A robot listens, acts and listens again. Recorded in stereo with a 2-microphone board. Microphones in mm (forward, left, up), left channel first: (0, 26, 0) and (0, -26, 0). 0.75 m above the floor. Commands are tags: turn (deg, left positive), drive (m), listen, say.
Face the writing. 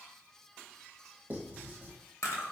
<turn deg="-35"/>
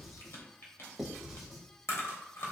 <say>Facing the writing.</say>